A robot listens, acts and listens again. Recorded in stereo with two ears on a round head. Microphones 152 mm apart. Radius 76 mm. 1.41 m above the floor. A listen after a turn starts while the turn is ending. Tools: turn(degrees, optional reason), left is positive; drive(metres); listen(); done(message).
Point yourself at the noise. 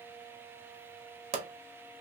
turn(degrees=-40, reason="The pop: about 40° right or 140° right.")
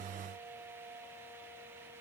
listen()
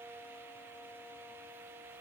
done("I heard a pop, but can't make it out now. It was about straight ahead or 100° right.")